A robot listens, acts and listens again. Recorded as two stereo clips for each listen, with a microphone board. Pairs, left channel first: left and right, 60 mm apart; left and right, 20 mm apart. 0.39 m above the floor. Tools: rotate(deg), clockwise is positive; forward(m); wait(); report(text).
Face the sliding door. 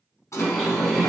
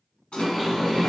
rotate(-65)
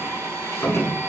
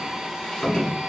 rotate(-50)
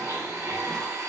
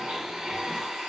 wait()
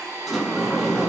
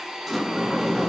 report("Found it: a sliding door, straight ahead, 1 to 2 m away.")